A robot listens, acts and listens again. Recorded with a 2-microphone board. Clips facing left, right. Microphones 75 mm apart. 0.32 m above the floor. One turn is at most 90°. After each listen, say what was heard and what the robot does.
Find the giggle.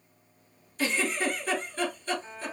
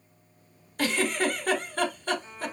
The giggle: about 55° right or 125° right. Turn 55° right.
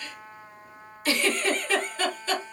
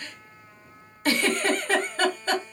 So it is at 55° right. Turn 55° right.
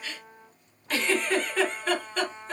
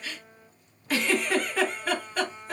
Facing the giggle, 1 to 2 m away.